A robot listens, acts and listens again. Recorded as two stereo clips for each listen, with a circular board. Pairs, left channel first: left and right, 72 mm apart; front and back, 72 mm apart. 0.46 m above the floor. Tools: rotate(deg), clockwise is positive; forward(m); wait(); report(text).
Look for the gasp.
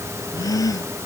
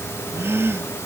rotate(-125)
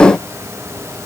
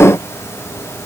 report("Facing where the gasp came from. I can't hear it now.")